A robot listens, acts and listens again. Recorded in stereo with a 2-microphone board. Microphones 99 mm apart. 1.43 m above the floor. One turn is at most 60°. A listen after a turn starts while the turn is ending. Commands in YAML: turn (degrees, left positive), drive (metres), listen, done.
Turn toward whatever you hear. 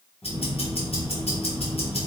turn: 60
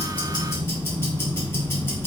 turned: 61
turn: 25
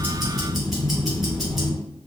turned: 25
done: "Found it: ticking, straight ahead, 1 to 2 m away."